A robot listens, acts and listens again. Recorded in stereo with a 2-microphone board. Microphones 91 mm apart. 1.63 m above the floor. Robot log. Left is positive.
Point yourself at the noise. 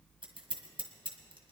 note: The scissors: about 60° right or 120° right.
cmd yaw -60
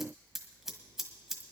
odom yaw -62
end: Facing the scissors.